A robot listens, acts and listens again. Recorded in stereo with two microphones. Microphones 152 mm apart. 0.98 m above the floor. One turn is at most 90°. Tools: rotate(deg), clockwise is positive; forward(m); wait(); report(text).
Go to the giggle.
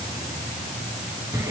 wait()
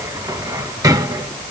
wait()
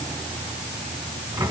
report("I can't make out a giggle to turn to.")